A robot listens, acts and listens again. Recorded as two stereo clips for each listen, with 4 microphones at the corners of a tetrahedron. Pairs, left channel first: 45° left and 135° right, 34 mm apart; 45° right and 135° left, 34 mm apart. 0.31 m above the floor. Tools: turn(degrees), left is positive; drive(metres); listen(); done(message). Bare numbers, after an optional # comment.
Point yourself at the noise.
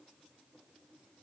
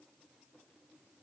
listen()
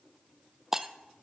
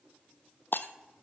# The breaking glass: 55° right.
turn(-55)
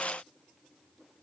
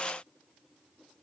done("I heard breaking glass from this way, but can't make it out now.")